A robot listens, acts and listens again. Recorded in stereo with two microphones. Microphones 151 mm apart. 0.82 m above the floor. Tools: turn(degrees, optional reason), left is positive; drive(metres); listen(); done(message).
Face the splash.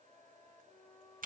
listen()
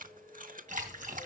turn(degrees=-60, reason="The splash: about 60° right or 120° right.")
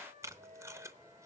listen()
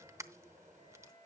done("I heard a splash, but can't make it out now. It was about straight ahead or 60° right.")